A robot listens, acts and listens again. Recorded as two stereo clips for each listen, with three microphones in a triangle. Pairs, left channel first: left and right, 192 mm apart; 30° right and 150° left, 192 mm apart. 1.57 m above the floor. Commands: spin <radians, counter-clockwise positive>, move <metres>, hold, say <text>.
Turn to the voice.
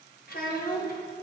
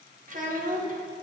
spin 2.01
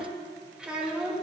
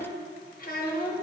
say Facing the child speaking, 1 to 2 m away.